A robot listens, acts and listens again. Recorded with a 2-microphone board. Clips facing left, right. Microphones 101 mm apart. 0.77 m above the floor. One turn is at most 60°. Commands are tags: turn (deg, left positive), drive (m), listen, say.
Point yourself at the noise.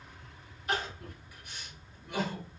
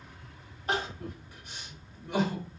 <turn deg="-40"/>
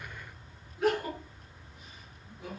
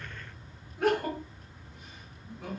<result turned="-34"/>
<turn deg="-60"/>
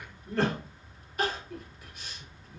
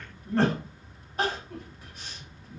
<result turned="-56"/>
<turn deg="-45"/>
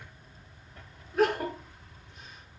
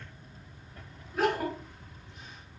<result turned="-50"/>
<say>Facing the crying, 1 to 2 m away.</say>